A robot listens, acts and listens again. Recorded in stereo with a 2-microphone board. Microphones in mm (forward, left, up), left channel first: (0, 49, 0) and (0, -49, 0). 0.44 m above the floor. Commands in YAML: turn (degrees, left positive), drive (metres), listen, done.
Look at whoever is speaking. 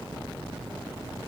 listen: true
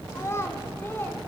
turn: 20
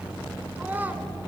turn: -20
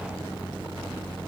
listen: true
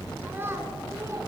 turn: -25
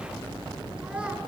listen: true
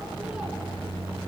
listen: true
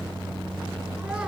done: "Facing where the child speaking came from. I can't hear it now."